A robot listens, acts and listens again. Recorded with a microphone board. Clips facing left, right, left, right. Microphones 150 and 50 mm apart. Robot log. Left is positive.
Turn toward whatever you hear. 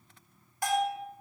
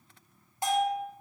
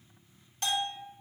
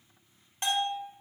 note: The bell: about 20° right or 160° right.
cmd yaw -20
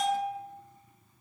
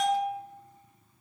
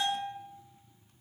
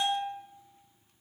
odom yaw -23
end: Found it: a bell, straight ahead.